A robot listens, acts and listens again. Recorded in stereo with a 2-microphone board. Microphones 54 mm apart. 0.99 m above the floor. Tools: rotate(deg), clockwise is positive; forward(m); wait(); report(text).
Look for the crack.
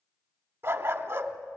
wait()
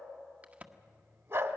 rotate(25)
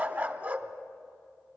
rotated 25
wait()
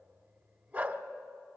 report("I heard a crack, but can't make it out now. It was about straight ahead or 130° right.")